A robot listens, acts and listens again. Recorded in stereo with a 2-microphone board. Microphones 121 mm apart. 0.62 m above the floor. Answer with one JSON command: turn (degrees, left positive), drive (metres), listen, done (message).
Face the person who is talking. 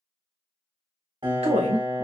{"turn": -65}
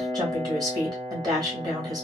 {"turn": -35}
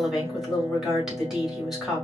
{"done": "Facing the woman speaking, 2 to 4 m away."}